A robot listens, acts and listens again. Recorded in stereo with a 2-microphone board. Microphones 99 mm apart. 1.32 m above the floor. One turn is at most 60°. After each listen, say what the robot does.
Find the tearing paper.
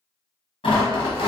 Turn 60° left.
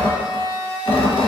Turn 55° left.
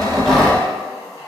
Found it: tearing paper, straight ahead, 1 to 2 m away.